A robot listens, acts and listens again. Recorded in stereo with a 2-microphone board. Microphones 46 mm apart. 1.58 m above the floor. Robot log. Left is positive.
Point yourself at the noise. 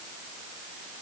cmd idle
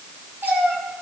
note: The cat meowing: about 50° right or 130° right.
cmd yaw -50
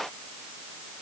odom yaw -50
cmd idle
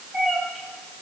note: So it is at 15° right.
cmd yaw -15
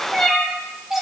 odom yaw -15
end: Facing the cat meowing.